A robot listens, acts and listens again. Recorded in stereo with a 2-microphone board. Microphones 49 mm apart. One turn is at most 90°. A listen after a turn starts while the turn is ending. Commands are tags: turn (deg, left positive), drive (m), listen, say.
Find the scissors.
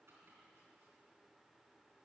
<listen/>
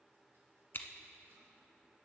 <turn deg="50"/>
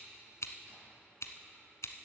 <turn deg="80"/>
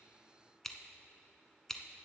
<turn deg="10"/>
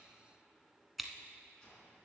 <say>Found it: scissors, straight ahead.</say>